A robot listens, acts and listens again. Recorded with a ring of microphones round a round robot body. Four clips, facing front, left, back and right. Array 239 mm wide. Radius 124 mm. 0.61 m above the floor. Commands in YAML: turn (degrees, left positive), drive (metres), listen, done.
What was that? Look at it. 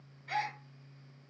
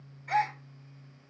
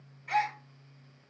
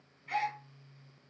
turn: 100
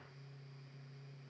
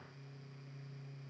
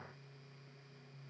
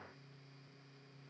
done: "I heard a gasp from this way, but can't make it out now."